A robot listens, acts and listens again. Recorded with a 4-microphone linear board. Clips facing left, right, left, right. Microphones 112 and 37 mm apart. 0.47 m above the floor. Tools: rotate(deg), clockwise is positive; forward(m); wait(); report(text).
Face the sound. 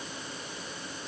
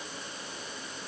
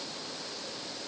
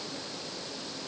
wait()
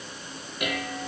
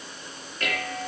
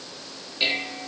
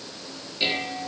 rotate(-30)
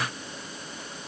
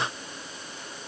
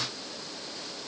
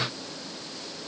wait()
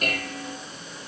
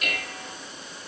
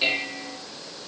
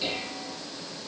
rotate(-140)
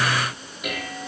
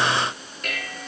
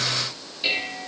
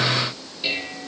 rotate(-10)
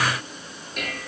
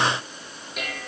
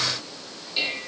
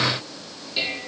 report("Facing the dishes clattering.")